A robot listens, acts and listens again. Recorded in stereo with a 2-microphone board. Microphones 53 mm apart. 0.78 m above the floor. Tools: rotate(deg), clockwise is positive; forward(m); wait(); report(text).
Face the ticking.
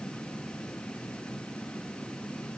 wait()
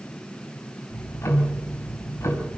rotate(-60)
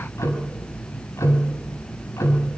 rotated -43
rotate(-75)
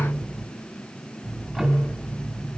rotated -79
report("Found it: ticking, straight ahead, over 4 m away.")